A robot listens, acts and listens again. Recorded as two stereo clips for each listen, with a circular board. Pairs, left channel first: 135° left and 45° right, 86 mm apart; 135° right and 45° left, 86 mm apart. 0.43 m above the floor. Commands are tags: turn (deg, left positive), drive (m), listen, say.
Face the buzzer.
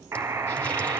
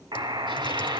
<turn deg="10"/>
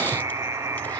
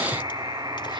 <say>Found it: a buzzer, straight ahead, 1 to 2 m away.</say>